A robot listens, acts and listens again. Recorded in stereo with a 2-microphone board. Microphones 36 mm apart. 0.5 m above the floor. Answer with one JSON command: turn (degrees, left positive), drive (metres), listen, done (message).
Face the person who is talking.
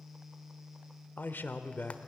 {"turn": 55}
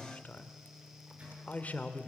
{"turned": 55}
{"turn": 50}
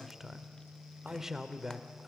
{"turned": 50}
{"turn": -15}
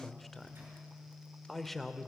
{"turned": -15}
{"done": "Found it: a man speaking, straight ahead, 1 to 2 m away."}